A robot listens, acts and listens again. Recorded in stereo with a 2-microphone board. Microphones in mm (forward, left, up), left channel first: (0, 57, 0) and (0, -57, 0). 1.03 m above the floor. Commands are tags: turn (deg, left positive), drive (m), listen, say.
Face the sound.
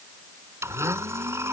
<turn deg="-20"/>
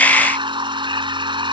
<turn deg="-135"/>
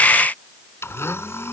<turn deg="20"/>
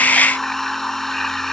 <say>Found it: a blender, straight ahead.</say>